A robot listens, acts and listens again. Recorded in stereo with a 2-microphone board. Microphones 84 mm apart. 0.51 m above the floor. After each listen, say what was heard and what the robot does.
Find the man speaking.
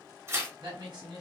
The man speaking: about 55° right or 125° right. Turn 55° right.
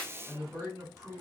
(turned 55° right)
So it is at 45° right. Turn 45° right.
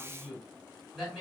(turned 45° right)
Facing the man speaking.